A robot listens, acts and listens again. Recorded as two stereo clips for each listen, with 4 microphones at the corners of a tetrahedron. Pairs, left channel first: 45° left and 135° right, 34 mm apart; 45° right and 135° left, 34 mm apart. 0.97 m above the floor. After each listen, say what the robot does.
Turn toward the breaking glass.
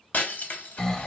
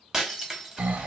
Turn 60° left.
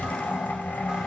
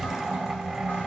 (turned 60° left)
Facing where the breaking glass came from. I can't hear it now.